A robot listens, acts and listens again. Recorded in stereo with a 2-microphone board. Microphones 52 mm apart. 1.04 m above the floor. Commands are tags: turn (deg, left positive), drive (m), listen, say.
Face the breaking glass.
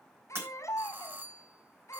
<turn deg="-50"/>
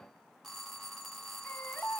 <listen/>
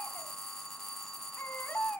<say>I heard breaking glass, but can't make it out now. It was about straight ahead or 80° right.</say>